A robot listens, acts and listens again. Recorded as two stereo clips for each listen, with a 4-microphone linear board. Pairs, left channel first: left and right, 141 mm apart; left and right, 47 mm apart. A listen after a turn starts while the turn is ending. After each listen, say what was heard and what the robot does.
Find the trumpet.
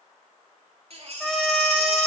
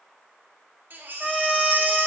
Turn 30° left.
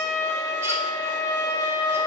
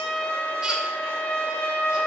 So it is at 155° left. Turn 155° left.
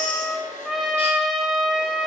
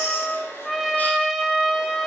Facing the trumpet.